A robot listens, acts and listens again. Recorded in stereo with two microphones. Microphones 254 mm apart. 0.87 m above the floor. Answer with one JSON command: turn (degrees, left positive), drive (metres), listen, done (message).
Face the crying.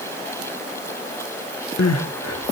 {"turn": 75}
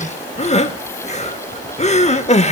{"turn": 25}
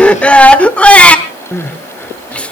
{"done": "Facing the crying, 1 to 2 m away."}